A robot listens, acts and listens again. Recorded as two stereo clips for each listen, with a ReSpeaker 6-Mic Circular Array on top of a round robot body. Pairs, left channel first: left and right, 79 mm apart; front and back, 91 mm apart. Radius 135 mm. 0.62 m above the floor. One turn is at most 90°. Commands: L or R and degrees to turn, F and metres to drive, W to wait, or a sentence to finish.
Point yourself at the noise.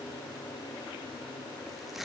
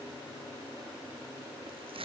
L90
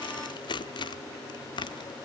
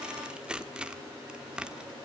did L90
L90
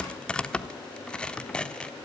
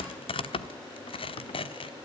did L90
L10
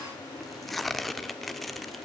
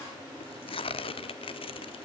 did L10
Found it: tearing paper, straight ahead.